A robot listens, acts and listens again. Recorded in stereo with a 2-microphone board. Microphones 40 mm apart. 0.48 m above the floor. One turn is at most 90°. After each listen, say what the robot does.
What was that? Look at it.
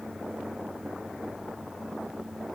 Keep listening.
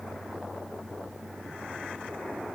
Keep listening.
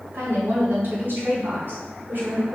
Turn 60° right.
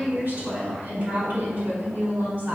Turn 55° right.
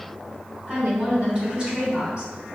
Turn 30° right.
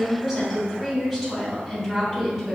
Turn 15° right.
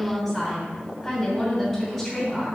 Found it: a woman speaking, straight ahead, over 4 m away.